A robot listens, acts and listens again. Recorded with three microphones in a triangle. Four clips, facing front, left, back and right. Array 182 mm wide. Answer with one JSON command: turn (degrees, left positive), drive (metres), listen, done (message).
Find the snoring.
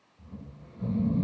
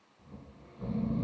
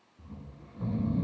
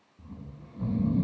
{"turn": -115}
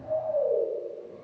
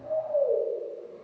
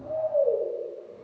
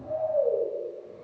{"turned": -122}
{"done": "Facing the snoring, over 4 m away."}